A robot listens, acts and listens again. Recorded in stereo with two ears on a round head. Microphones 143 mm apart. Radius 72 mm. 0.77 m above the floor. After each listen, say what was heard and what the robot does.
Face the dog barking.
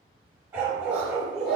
Turn 30° right.
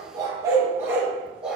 Turn 30° right.
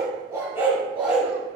Turn 30° left.
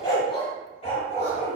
So it is at 130° left. Turn 130° left.
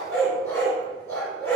The dog barking is now 15° left. Turn 15° left.
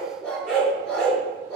Found it: a dog barking, straight ahead, 2 to 4 m away.